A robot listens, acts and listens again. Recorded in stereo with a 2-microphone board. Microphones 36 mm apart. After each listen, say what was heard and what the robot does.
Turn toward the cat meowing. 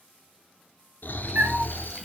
The cat meowing: about 40° right or 140° right. Turn 40° right.
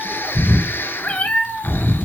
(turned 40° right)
So it is at 50° left. Turn 50° left.
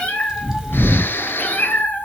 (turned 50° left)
The cat meowing is now 50° left. Turn 50° left.
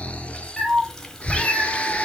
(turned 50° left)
The cat meowing is now 15° left. Turn 15° left.
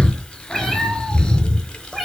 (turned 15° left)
Found it: a cat meowing, straight ahead, 2 to 4 m away.